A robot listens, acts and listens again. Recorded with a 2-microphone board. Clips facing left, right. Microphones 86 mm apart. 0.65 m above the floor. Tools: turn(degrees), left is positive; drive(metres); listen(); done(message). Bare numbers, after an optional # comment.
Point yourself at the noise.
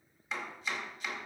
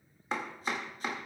# The chopping: about 45° right or 135° right.
turn(-45)
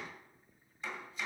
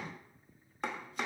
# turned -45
# So it is at 85° right.
turn(-85)
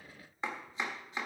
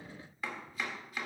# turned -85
# The chopping is now 30° left.
turn(30)
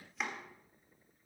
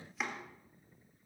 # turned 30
done("Found it: chopping, straight ahead, 1 to 2 m away.")